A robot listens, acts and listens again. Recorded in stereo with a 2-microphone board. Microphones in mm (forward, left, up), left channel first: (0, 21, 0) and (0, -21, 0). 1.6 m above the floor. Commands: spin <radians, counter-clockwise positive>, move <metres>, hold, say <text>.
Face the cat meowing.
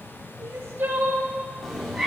spin 0.52
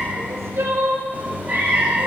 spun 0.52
spin -0.79
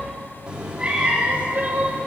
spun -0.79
spin -0.52
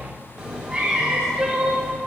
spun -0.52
spin -0.26
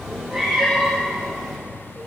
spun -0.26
say Found it: a cat meowing, straight ahead.